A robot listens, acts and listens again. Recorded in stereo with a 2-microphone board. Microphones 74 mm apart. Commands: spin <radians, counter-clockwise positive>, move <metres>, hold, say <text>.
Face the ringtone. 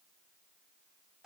hold
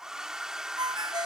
spin -1.57
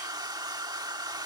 hold
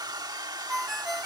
say Facing the ringtone.